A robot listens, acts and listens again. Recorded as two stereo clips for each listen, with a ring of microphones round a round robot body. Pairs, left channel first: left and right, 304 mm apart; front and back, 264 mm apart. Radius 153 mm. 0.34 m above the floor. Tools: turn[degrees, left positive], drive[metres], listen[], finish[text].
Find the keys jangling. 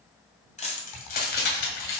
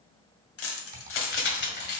Thought: The keys jangling: 45° left.
Action: turn[45]
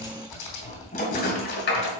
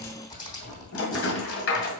Thought: The keys jangling is now 40° left.
Action: turn[40]
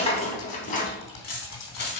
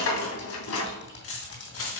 Thought: The keys jangling is now 35° left.
Action: turn[35]
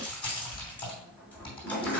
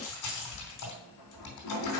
Action: finish[Found it: keys jangling, straight ahead, 2 to 4 m away.]